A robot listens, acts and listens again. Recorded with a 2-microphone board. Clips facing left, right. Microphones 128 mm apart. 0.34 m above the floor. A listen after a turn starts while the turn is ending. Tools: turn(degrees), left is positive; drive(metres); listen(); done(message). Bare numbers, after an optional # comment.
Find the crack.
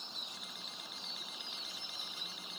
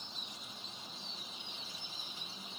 listen()
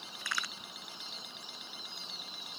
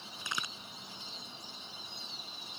# The crack: about 20° right or 160° right.
turn(-20)
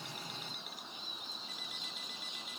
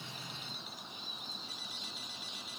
listen()
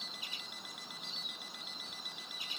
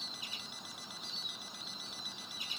done("I heard a crack, but can't make it out now. It was about straight ahead or 140° right.")